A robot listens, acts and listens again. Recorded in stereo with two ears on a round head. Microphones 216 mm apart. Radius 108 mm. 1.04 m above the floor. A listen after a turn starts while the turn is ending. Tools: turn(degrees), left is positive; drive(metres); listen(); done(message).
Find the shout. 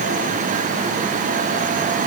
listen()
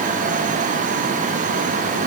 listen()
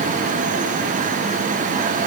done("I can't make out a shout.")